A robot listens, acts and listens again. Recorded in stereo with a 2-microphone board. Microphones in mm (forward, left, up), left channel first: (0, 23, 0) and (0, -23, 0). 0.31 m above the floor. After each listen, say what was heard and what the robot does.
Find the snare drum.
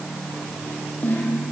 The snare drum: about 45° left or 135° left. Turn 45° left.
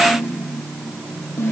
So it is at 90° left. Turn 90° left.
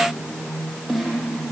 Facing the snare drum, over 4 m away.